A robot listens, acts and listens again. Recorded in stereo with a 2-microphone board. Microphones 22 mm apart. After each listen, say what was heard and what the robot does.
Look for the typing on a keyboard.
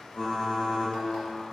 The typing on a keyboard: about 60° left or 120° left. Turn 60° left.
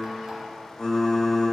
So it is at 35° left. Turn 35° left.
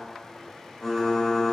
Found it: typing on a keyboard, straight ahead.